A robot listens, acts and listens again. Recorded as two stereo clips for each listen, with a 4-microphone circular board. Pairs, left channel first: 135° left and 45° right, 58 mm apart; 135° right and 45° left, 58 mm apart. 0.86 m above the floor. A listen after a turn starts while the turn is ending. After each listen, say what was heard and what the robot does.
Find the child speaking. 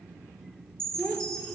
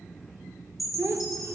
The child speaking: 75° left. Turn 75° left.
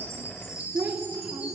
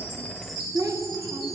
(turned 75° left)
The child speaking is now 25° left. Turn 25° left.
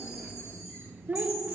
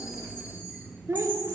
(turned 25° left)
The child speaking is now 20° left. Turn 20° left.
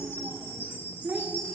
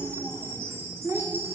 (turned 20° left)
The child speaking is now 20° left. Turn 20° left.
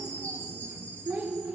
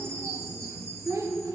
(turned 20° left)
The child speaking is now 15° left. Turn 15° left.
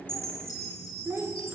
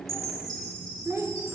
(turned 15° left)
Found it: a child speaking, straight ahead, 1 to 2 m away.